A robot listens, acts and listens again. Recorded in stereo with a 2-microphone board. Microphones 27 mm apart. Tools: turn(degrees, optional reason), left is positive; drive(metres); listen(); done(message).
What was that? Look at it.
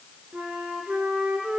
turn(degrees=-90)
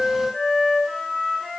done("Found it: a flute, straight ahead, 2 to 4 m away.")